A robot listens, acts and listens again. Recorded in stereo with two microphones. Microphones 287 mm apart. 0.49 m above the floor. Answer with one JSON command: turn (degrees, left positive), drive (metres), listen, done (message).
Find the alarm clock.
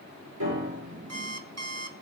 {"turn": -60}
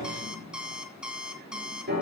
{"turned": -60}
{"done": "Found it: an alarm clock, straight ahead."}